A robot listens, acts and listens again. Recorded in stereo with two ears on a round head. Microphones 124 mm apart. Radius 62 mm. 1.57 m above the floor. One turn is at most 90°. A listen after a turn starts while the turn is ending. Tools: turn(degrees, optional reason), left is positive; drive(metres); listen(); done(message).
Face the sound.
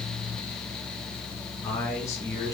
turn(degrees=20, reason="The man speaking: about 20° left or 160° left.")
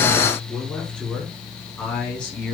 turn(degrees=30)
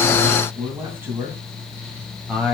turn(degrees=-10, reason="So it is at 10° right.")
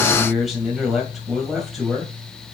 done("Found it: a man speaking, straight ahead.")